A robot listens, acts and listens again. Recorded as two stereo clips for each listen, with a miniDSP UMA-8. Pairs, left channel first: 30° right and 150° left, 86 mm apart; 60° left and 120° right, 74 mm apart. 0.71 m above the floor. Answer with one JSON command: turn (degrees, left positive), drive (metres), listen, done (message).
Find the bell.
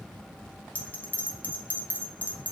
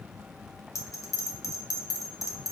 {"turn": 40}
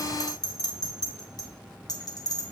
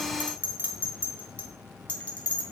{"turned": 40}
{"done": "Facing the bell, under 1 m away."}